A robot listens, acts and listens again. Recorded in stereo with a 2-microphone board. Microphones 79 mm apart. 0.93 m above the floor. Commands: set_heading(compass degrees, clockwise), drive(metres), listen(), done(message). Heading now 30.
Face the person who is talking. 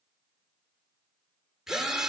listen()
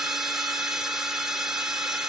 listen()
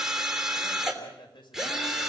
set_heading(300)
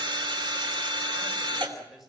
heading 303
done("Facing the man speaking.")